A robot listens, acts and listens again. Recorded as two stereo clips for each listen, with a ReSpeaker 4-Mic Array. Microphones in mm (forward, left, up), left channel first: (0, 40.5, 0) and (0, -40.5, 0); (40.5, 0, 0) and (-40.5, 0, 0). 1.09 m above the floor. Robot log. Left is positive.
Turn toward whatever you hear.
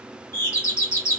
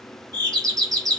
note: The doorbell: 140° left.
cmd yaw +140
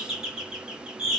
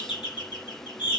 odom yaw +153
note: The doorbell is now 10° right.
cmd yaw -10
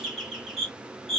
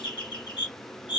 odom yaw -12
end: Facing the doorbell.